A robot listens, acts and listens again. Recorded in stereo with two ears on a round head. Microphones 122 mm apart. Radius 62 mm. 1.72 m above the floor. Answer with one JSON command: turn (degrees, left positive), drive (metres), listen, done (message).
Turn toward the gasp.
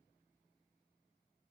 {"listen": true}
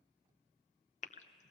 {"turn": 50}
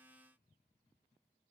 {"listen": true}
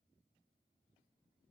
{"done": "I heard a gasp, but can't make it out now. It was about straight ahead or 80° left."}